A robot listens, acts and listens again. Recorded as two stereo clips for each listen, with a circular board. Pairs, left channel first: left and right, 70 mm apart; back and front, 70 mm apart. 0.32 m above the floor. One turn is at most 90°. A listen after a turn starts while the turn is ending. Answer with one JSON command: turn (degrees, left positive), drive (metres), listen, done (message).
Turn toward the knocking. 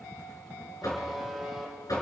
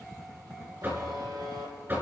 {"turn": 60}
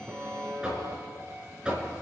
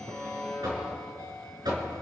{"turn": -15}
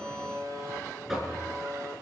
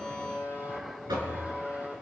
{"done": "Facing the knocking, 2 to 4 m away."}